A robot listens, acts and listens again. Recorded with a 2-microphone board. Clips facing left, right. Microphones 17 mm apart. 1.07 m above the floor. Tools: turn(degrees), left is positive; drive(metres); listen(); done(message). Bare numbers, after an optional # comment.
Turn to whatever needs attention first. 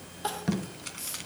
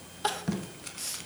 # The crying: about 25° right or 155° right.
turn(-25)
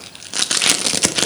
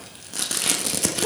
listen()
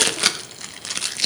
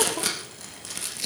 listen()
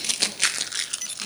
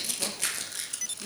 done("I heard crying, but can't make it out now. It was about straight ahead or 130° right.")